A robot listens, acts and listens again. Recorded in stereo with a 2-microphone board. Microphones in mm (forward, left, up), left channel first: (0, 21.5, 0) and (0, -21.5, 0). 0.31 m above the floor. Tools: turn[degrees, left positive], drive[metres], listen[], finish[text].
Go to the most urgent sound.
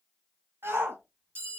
Thought: The shout: about 60° right or 120° right.
Action: turn[-60]
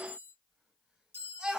Thought: So it is at 20° right.
Action: turn[-20]
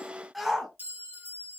Action: drive[1.0]
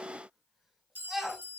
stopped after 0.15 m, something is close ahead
Action: finish[Blocked. The shout is further on, straight ahead.]